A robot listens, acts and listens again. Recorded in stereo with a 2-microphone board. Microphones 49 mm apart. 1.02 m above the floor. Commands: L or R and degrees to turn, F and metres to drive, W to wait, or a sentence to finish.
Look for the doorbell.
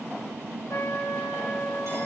W
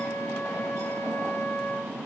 W
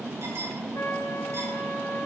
I can't make out a doorbell to turn to.